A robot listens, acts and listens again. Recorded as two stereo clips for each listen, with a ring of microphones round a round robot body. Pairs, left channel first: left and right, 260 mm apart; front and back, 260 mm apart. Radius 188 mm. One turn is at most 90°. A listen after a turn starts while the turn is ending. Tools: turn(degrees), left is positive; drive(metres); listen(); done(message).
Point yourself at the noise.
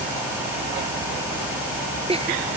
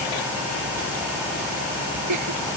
turn(degrees=-90)
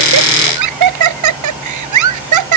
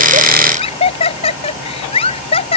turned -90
turn(degrees=-75)
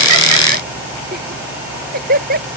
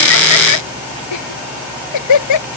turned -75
turn(degrees=-25)
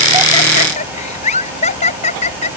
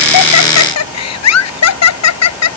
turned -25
turn(degrees=15)
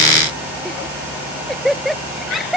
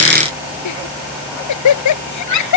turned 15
done("Found it: laughter, straight ahead.")